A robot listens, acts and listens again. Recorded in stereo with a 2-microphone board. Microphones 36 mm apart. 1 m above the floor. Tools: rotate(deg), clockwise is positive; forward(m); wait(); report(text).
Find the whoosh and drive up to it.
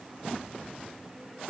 wait()
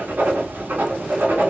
wait()
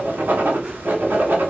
report("I can't make out a whoosh to turn to.")